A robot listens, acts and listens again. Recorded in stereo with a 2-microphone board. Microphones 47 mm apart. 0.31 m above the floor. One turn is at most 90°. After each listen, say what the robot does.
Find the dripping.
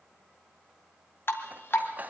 Turn 55° left.
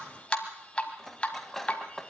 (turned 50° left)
Turn 25° left.
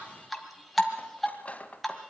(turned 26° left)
Found it: dripping, straight ahead, 1 to 2 m away.